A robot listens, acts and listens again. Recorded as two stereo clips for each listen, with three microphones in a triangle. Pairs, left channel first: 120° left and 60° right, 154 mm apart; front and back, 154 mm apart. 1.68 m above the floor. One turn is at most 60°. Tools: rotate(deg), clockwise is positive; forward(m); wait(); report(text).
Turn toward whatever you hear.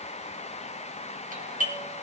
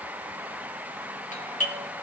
rotate(35)
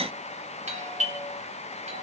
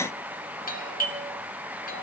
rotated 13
rotate(20)
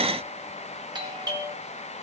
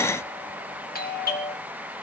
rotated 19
report("Found it: a doorbell, straight ahead.")